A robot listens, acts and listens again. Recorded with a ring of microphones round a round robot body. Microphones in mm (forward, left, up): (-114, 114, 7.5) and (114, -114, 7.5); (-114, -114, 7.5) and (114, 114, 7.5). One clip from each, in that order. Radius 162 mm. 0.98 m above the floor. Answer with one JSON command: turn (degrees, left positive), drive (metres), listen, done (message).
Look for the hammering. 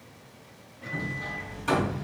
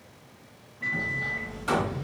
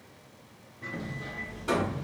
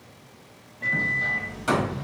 {"turn": 45}
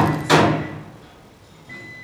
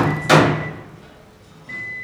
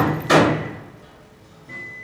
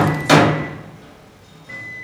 {"turn": 10}
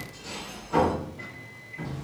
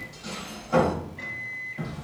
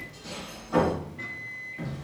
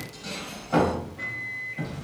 {"done": "Facing the hammering, 1 to 2 m away."}